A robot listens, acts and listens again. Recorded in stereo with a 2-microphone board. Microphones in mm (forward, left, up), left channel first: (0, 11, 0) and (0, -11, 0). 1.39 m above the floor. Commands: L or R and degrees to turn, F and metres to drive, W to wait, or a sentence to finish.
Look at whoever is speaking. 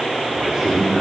R30
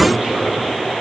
R120
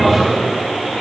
R10
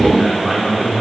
Found it: a man speaking, straight ahead, over 4 m away.